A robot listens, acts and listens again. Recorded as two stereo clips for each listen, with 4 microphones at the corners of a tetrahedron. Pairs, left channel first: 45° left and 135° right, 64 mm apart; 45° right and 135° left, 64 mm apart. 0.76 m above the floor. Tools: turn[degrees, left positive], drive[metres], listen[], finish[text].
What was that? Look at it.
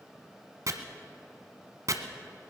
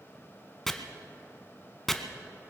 Thought: The chopping: 130° right.
Action: turn[-130]
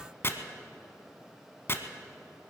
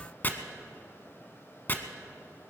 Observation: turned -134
Action: finish[Facing the chopping, 1 to 2 m away.]